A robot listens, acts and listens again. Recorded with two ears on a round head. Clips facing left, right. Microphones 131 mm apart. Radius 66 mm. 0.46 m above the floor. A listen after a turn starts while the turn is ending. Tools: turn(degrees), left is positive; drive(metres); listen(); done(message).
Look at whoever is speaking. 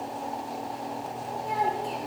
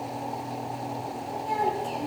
turn(degrees=30)
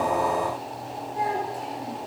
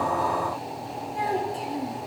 turn(degrees=-25)
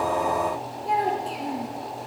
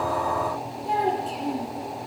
done("Found it: a child speaking, straight ahead.")